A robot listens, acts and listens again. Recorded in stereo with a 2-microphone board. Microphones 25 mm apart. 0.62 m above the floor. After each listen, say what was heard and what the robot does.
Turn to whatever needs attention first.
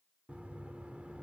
Keep listening.
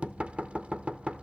Keep listening.
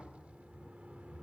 I can't make out anything urgent to turn to.